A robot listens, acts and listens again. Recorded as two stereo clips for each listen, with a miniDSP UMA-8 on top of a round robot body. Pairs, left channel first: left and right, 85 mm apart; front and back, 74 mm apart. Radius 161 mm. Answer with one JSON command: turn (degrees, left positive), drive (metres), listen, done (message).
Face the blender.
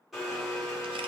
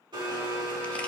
{"turn": 180}
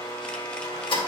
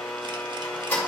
{"turn": 65}
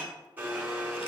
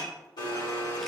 {"turn": -20}
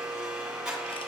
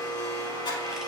{"done": "Facing the blender."}